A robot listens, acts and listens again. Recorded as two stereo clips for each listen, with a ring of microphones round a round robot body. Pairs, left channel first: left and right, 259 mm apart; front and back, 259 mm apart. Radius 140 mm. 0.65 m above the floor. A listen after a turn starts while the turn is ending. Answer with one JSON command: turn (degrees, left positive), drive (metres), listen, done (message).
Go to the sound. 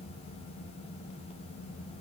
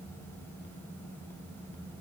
{"listen": true}
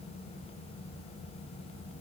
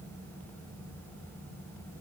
{"listen": true}
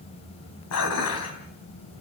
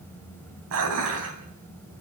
{"turn": 135}
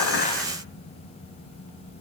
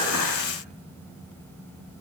{"listen": true}
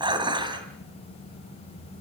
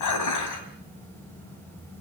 {"turn": -15}
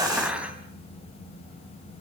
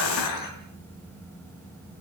{"drive": 1.0}
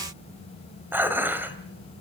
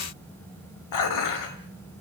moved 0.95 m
{"turn": -10}
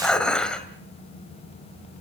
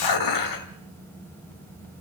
{"drive": 1.0}
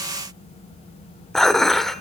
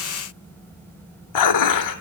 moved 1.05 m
{"drive": 1.0}
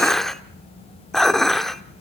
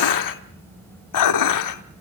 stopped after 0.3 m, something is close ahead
{"done": "I am next to the dishes clattering."}